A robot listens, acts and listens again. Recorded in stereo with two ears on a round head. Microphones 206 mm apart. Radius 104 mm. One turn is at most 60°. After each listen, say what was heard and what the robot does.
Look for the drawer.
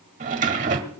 The drawer: about 35° right or 145° right. Turn 35° right.
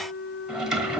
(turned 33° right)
Facing the drawer, 1 to 2 m away.